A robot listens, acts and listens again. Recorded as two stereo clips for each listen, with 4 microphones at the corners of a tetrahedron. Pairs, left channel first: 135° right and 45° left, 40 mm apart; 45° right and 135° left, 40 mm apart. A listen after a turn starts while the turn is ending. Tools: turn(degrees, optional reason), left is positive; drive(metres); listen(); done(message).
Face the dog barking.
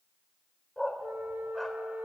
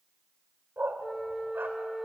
turn(degrees=150, reason="The dog barking: 150° left.")
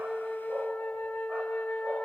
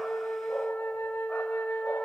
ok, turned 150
listen()
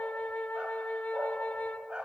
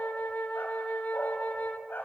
turn(degrees=-20, reason="The dog barking is now 20° right.")
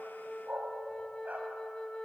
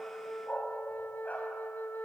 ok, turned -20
done("Facing the dog barking.")